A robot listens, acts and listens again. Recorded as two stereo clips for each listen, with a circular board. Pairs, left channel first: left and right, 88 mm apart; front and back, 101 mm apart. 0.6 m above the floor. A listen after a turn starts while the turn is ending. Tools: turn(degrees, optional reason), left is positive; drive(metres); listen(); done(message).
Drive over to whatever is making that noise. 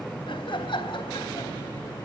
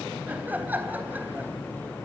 turn(degrees=110, reason="The laughter: 110° left.")
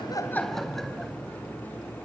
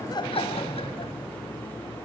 listen()
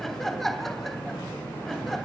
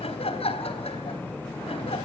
drive(metres=1.0)
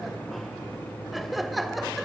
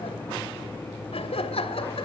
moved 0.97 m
drive(metres=1.0)
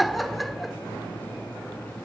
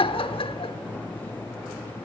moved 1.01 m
drive(metres=1.0)
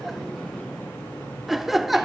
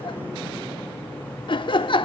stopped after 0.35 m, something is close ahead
done("I am next to the laughter.")